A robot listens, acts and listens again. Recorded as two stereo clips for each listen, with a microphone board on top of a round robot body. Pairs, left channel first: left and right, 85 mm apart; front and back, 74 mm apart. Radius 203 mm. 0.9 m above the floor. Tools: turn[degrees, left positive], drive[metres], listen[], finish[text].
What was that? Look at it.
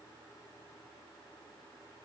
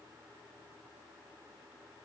Action: listen[]
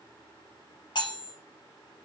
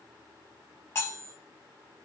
Thought: The cutlery clinking: 60° left.
Action: turn[60]
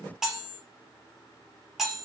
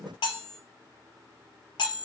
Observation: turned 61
Action: finish[Found it: cutlery clinking, straight ahead, under 1 m away.]